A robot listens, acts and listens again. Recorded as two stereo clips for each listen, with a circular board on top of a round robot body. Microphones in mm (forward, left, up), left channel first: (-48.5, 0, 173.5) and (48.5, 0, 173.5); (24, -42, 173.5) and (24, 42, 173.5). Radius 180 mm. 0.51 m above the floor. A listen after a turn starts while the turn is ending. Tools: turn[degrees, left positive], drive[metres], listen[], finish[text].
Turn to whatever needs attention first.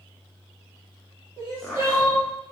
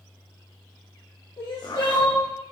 Thought: The crying: 130° right.
Action: turn[-130]
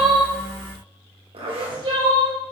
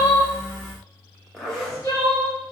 Thought: The crying is now 30° right.
Action: turn[-30]
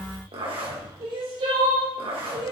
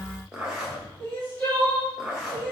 Thought: The crying is now 20° right.
Action: turn[-20]
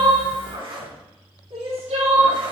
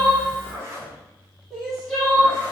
Action: finish[Facing the crying.]